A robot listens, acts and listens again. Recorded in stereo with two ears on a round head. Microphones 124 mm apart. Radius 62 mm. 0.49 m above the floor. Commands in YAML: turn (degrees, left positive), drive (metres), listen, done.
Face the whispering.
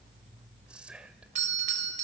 turn: -30
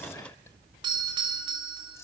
turn: 25
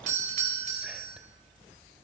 listen: true
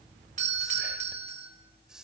done: "Facing the whispering."